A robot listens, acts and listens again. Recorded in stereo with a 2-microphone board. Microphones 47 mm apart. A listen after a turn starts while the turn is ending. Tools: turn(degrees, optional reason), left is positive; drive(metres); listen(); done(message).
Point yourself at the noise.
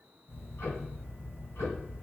turn(degrees=70, reason="The ticking: about 70° left or 110° left.")
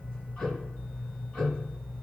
turn(degrees=20, reason="So it is at 20° left.")
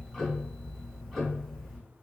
done("Found it: ticking, straight ahead, 1 to 2 m away.")